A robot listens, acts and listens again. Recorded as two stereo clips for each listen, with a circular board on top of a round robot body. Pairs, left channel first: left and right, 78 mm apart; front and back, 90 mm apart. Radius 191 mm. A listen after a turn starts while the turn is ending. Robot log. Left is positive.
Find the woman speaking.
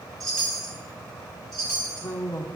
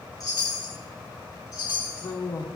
note: The woman speaking: 45° left.
cmd yaw +45
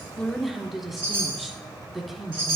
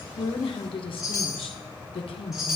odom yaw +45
end: Found it: a woman speaking, straight ahead.